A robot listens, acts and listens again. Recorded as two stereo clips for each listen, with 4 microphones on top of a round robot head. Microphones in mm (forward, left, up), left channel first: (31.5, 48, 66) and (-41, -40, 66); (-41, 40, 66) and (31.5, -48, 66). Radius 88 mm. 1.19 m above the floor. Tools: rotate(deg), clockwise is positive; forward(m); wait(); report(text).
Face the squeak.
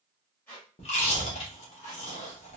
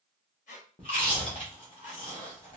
rotate(-125)
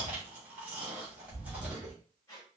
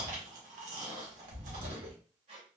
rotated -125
rotate(15)
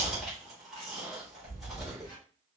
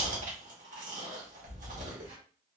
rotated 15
wait()
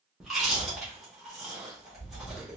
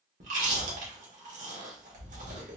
wait()
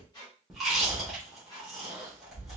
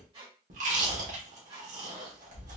report("Found it: a squeak, straight ahead, 1 to 2 m away.")